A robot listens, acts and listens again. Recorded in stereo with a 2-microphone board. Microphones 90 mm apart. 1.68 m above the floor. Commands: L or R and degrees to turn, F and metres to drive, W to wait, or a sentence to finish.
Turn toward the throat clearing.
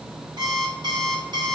W
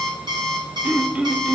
R30
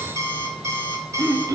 R135
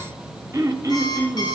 R40
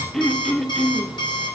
Found it: throat clearing, straight ahead.